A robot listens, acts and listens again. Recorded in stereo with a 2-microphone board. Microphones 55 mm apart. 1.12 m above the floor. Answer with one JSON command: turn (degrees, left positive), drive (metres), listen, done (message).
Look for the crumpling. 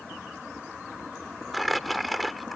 {"turn": 30}
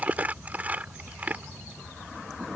{"turn": -30}
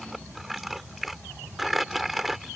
{"done": "Facing the crumpling."}